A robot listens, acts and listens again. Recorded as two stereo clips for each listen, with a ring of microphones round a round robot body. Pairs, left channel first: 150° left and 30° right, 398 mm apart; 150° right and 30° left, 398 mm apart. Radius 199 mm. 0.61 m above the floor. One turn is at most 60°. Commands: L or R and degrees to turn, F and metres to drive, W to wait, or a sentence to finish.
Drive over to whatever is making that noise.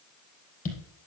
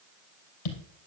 R60
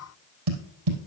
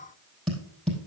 R60
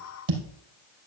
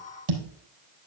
F1.0
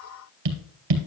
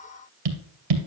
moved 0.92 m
F1.0
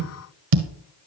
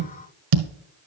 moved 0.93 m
F1.0
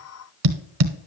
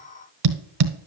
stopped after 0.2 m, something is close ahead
I am next to the tapping.